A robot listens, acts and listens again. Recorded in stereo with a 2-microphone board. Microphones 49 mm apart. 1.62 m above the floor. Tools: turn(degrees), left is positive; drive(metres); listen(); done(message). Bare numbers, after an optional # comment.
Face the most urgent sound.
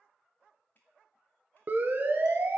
# The siren: about 40° right or 140° right.
turn(-40)
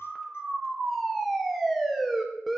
done("Facing the siren.")